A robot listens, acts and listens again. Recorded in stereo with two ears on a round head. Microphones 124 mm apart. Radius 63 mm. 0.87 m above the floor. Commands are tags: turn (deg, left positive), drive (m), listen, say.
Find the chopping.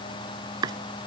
<turn deg="-30"/>
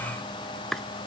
<say>Facing the chopping.</say>